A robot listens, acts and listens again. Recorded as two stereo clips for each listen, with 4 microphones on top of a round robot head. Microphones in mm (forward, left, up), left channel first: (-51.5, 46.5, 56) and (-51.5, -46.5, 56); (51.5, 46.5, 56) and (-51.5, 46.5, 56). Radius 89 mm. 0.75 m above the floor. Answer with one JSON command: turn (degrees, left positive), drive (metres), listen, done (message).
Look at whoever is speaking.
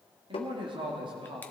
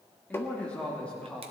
{"turn": -80}
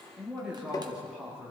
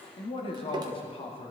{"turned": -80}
{"turn": -10}
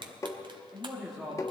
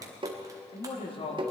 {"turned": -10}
{"done": "Found it: a man speaking, straight ahead."}